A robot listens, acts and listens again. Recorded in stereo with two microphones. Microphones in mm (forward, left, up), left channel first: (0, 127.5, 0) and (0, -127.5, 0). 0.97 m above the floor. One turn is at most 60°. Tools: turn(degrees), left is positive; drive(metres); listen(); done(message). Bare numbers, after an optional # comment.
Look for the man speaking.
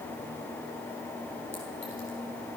listen()
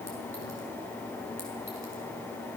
listen()
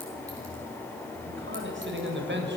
# The man speaking: about 45° right or 135° right.
turn(-45)
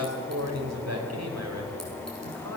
# So it is at 95° right.
turn(-60)
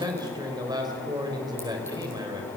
# The man speaking is now 15° right.
turn(-15)
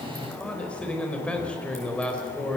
done("Facing the man speaking.")